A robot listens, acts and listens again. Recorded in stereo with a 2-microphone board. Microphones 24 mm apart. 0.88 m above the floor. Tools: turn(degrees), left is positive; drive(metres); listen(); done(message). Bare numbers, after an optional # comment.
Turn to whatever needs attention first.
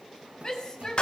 # The shout: about 25° left or 155° left.
turn(25)
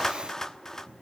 listen()
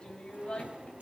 # So it is at 130° left.
turn(130)
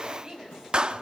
# The shout is now 25° right.
turn(-25)
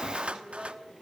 listen()
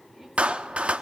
listen()
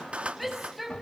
done("Facing the shout.")